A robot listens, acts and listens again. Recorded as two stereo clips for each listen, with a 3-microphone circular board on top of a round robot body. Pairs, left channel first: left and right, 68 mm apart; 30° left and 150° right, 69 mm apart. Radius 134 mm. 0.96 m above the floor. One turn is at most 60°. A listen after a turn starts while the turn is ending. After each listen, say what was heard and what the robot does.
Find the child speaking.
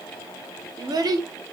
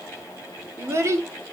The child speaking: 105° right. Turn 60° right.
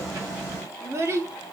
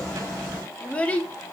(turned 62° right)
The child speaking is now 40° right. Turn 40° right.
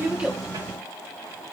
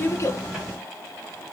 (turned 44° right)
Keep listening.
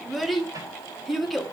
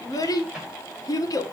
Found it: a child speaking, straight ahead, 1 to 2 m away.